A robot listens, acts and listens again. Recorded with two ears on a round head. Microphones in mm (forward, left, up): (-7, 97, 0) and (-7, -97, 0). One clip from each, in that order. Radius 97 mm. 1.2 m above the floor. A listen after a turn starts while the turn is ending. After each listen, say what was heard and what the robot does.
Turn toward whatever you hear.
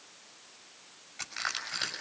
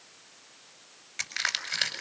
The crushing: about 70° right or 110° right. Turn 70° right.
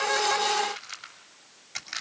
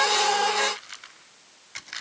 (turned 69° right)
Facing the crushing.